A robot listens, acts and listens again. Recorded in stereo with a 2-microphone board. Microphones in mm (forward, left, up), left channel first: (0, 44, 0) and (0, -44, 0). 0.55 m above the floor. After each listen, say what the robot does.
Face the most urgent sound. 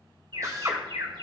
Turn 70° right.
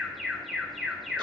Found it: an alarm, straight ahead.